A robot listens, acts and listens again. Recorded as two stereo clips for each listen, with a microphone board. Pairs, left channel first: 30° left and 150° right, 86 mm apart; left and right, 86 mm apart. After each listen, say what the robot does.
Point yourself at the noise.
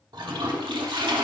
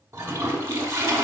Turn 145° right.
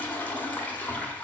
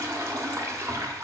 Turn 35° right.
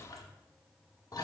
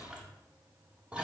Turn 10° right.
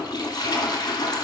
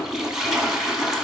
Facing the toilet flushing.